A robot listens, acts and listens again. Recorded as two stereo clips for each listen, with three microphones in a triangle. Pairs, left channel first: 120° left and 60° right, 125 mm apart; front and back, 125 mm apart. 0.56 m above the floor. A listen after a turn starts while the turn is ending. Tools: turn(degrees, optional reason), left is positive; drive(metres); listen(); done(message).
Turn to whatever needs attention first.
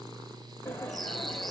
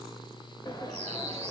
listen()
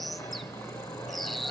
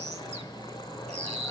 listen()
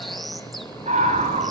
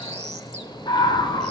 turn(degrees=-50, reason="The scream: 50° right.")
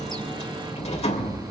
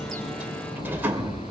done("Facing the scream, over 4 m away.")